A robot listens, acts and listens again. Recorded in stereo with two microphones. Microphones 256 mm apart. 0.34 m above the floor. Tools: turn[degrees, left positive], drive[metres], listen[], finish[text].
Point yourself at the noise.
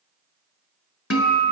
Thought: The guitar: about 70° left or 110° left.
Action: turn[70]
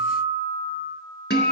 Thought: So it is at 40° left.
Action: turn[40]
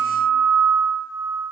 Action: finish[Found it: a guitar, straight ahead.]